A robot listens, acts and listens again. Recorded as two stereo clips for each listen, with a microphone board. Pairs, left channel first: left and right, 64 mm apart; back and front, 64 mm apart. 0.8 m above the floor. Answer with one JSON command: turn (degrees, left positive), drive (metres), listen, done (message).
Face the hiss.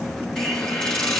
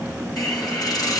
{"turn": 170}
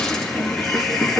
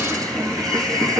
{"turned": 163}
{"done": "Found it: a hiss, straight ahead, over 4 m away."}